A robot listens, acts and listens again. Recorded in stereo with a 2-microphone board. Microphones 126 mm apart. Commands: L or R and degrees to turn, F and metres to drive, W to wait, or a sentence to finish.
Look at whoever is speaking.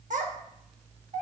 R90
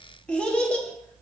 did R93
L10
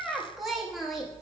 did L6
Facing the child speaking, under 1 m away.